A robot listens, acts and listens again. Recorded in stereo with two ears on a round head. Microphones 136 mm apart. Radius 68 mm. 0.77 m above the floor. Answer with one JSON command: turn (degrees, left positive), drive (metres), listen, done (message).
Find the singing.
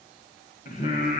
{"turn": 65}
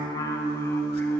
{"turn": 10}
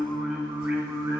{"turn": -15}
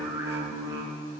{"turn": -25}
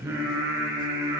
{"turn": -15}
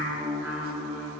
{"done": "Found it: singing, straight ahead."}